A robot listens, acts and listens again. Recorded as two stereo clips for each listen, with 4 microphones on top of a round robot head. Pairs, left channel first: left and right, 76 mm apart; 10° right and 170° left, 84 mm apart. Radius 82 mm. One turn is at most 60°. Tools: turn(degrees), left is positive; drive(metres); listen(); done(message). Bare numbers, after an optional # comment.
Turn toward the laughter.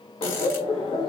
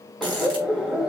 # The laughter: 90° left.
turn(60)
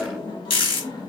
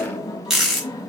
# The laughter is now 40° left.
turn(40)
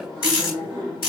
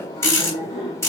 done("Facing the laughter, 2 to 4 m away.")